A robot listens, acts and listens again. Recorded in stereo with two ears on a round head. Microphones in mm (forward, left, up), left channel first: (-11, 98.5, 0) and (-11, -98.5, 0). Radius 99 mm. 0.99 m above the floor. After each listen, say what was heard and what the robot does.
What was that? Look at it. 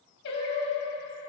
The singing: about 55° left or 125° left. Turn 55° left.
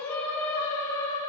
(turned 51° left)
So it is at 15° left. Turn 15° left.
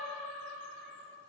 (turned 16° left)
Found it: singing, straight ahead.